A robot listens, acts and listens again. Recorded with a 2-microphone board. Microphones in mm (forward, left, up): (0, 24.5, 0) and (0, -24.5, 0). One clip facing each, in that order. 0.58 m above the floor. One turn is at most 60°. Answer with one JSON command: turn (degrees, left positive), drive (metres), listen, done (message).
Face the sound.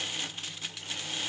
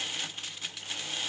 {"listen": true}
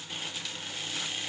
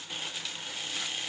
{"listen": true}
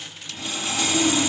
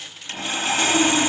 {"turn": -40}
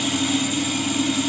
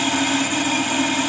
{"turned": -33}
{"turn": -60}
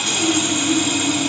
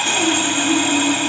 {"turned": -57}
{"turn": -40}
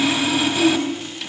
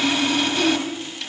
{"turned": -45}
{"done": "Facing the sawing."}